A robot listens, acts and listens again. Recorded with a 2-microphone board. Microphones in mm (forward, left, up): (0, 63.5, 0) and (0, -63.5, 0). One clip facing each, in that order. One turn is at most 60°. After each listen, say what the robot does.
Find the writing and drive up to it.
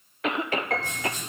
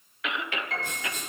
Turn 60° right.
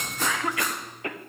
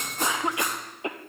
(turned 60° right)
Keep listening.
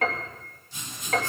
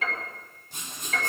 Turn 60° right.
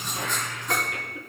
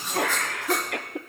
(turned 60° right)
Drive 1.0 m forward.
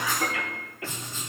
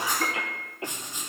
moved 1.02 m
Turn 15° right.
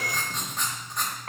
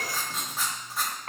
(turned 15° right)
Drive 1.0 m forward.
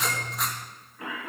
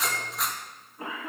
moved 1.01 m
Drive 1.0 m forward.
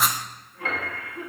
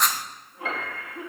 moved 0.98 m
Drive 1.0 m forward.
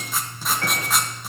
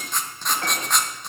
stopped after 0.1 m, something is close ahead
I am next to the writing.